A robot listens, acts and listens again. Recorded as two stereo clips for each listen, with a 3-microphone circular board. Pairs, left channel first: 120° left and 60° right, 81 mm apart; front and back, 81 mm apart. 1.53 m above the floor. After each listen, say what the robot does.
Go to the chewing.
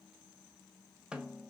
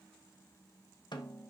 Keep listening.
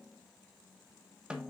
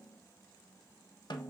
Keep listening.
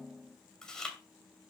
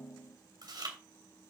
Turn 160° right.
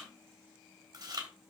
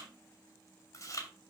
Turn 40° right.
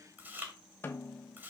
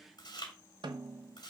Drive 1.0 m forward.
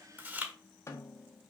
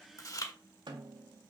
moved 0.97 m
Drive 1.0 m forward.
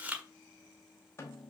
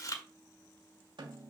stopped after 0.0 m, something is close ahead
I am next to the chewing.